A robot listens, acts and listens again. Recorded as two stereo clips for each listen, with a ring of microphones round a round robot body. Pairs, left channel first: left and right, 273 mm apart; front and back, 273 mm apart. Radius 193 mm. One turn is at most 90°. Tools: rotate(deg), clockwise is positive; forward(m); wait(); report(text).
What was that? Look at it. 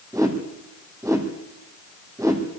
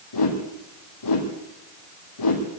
rotate(10)
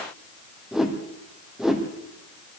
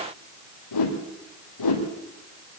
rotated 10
report("Facing the whoosh.")